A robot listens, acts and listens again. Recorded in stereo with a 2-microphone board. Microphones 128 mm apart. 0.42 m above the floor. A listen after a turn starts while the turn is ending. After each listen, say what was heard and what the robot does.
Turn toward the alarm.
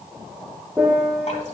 Keep listening.
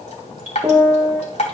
Keep listening.
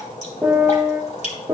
I can't make out an alarm, only a piano and dripping.